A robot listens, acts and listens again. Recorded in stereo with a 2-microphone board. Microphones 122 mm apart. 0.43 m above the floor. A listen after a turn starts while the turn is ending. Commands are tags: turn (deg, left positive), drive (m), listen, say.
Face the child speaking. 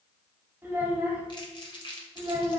<turn deg="-20"/>
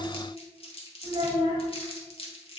<turn deg="-140"/>
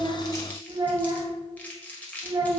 <turn deg="-45"/>
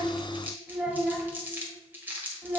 <turn deg="-10"/>
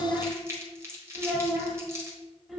<say>Facing the child speaking.</say>